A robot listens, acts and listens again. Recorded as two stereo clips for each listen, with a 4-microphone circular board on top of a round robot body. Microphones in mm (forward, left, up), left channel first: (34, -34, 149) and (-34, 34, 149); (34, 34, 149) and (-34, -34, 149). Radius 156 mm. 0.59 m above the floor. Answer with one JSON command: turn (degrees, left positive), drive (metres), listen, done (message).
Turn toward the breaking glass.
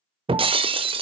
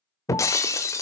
{"turn": 105}
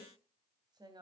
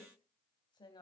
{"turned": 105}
{"done": "I heard breaking glass from this way, but can't make it out now."}